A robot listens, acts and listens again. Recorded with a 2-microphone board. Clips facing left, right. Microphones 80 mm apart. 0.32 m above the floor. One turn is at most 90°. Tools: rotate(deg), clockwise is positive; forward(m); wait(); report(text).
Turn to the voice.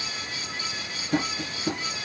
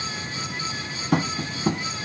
wait()
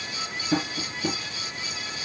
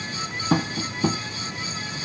wait()
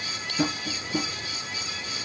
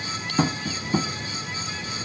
report("I can't make out anyone speaking, only tapping.")